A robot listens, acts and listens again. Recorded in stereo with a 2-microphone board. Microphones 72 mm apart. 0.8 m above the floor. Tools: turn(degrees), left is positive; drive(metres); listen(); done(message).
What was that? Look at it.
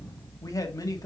turn(degrees=55)
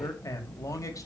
turn(degrees=55)
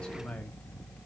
turn(degrees=15)
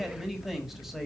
done("Found it: a man speaking, straight ahead, 1 to 2 m away.")